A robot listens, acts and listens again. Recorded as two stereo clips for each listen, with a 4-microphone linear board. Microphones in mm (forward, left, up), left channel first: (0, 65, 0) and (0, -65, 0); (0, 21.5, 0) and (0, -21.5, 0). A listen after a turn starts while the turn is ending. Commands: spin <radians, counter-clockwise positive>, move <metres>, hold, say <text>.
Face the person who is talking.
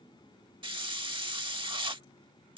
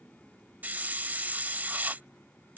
hold
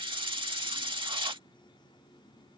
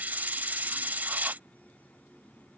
hold
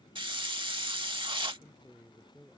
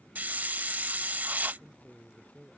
spin 0.52
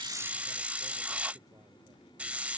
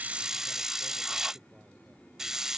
hold
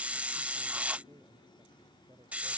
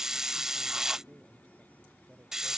spin -0.52
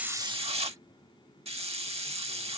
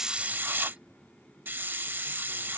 hold
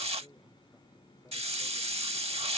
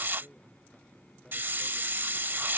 spin 0.17
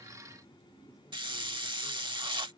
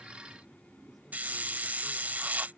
hold
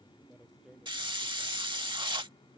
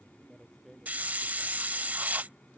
say Found it: a man speaking, straight ahead.